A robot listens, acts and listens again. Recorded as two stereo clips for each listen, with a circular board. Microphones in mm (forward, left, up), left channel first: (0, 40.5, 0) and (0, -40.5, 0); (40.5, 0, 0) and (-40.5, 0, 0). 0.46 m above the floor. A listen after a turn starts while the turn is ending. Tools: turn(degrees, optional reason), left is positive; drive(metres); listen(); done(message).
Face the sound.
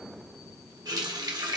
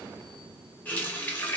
turn(degrees=-65, reason="The running tap: 65° right.")
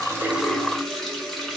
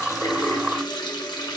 done("Found it: a running tap, straight ahead, under 1 m away.")